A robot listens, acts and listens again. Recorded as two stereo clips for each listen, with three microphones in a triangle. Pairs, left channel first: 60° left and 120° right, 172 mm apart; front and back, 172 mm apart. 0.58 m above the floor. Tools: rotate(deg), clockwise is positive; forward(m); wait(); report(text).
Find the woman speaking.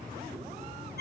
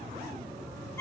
wait()
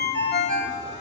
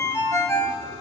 wait()
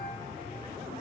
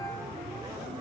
report("I can't make out a woman speaking to turn to.")